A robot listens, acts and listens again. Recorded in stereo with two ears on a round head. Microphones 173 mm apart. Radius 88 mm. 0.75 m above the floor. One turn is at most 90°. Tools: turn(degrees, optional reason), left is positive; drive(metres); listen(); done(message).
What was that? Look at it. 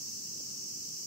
listen()
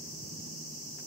listen()
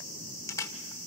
turn(degrees=15, reason="The camera shutter: about 15° left or 165° left.")
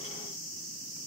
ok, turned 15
listen()
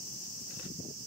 listen()
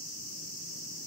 done("I heard a camera shutter, but can't make it out now. It was about straight ahead or 150° left.")